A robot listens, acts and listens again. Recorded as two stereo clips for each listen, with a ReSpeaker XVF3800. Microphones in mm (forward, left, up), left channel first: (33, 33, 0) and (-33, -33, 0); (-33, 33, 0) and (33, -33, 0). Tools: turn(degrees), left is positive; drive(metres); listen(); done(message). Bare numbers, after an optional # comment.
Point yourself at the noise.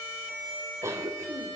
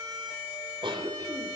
# The cough: 75° right.
turn(-75)
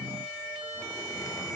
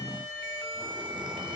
# The cough is now 10° right.
turn(-10)
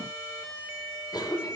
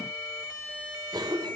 done("Facing the cough, over 4 m away.")